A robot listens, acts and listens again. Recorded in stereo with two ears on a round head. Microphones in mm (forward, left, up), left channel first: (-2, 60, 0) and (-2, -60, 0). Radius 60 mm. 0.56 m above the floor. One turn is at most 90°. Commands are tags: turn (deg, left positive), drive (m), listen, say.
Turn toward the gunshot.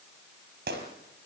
<turn deg="-90"/>
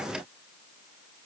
<say>Facing where the gunshot came from. I can't hear it now.</say>